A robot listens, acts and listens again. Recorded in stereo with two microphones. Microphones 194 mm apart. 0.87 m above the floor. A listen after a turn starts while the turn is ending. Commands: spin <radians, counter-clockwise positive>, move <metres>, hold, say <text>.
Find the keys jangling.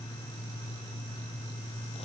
hold
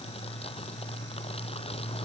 hold
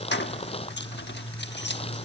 spin 1.13
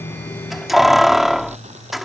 say Facing the keys jangling.